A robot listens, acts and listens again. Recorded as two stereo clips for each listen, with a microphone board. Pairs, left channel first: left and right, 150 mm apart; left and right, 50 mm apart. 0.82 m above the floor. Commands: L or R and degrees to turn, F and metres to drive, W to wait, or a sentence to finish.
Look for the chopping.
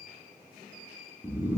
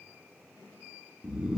W
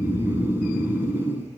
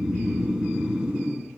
W
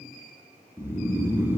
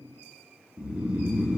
I can't make out chopping to turn to.